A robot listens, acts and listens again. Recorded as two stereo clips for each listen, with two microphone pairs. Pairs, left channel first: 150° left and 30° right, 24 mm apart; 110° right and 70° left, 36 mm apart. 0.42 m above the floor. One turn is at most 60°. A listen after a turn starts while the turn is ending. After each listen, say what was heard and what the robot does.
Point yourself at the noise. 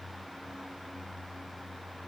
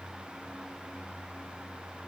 Keep listening.
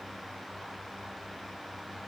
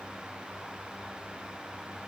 Keep listening.
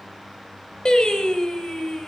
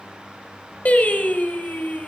The singing: 155° right. Turn 60° right.
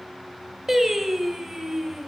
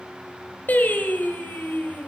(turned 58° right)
The singing is now 100° right. Turn 60° right.
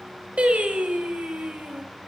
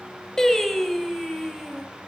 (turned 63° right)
The singing is now 35° right. Turn 35° right.
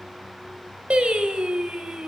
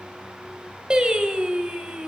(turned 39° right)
Found it: singing, straight ahead.